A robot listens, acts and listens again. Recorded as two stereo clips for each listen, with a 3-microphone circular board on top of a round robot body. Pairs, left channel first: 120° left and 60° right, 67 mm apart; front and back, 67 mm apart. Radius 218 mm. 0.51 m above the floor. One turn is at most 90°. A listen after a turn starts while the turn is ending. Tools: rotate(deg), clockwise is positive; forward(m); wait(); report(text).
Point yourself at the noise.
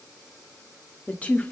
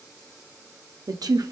rotate(90)
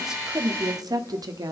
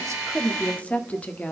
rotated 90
rotate(70)
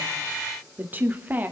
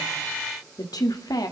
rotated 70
report("Facing the woman speaking, 1 to 2 m away.")